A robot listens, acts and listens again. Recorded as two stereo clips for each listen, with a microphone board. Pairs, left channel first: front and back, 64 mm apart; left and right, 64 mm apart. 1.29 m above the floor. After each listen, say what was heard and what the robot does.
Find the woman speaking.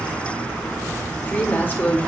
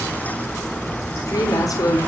The woman speaking: 60° left. Turn 60° left.
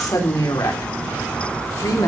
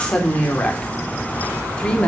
The woman speaking is now 15° left. Turn 15° left.
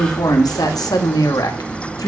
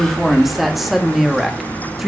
Found it: a woman speaking, straight ahead, 2 to 4 m away.